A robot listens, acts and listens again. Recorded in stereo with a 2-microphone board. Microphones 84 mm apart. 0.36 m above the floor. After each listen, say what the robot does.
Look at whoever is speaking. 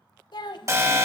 Turn 65° left.
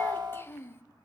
Turn 30° left.
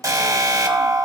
Keep listening.
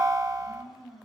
Keep listening.
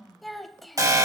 Found it: a child speaking, straight ahead, under 1 m away.